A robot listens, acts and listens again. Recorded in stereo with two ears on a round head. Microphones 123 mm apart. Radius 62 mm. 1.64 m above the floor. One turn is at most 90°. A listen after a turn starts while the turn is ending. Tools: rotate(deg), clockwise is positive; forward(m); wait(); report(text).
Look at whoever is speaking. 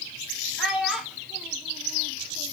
rotate(30)
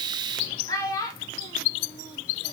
rotate(-25)
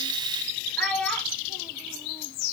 report("Facing the child speaking.")